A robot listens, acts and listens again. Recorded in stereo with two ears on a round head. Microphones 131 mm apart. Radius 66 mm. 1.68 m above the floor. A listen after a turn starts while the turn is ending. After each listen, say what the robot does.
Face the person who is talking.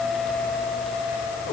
Keep listening.
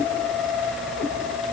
Keep listening.
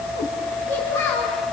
Turn 20° left.
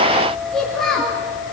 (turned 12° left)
Found it: a child speaking, straight ahead, 2 to 4 m away.